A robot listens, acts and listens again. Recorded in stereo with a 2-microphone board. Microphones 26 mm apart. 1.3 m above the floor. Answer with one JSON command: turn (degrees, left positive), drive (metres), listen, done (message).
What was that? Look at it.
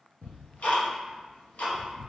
{"turn": 65}
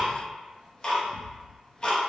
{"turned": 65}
{"turn": 35}
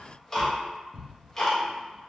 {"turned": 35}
{"turn": 20}
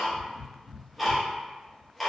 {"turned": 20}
{"done": "Facing the ticking, under 1 m away."}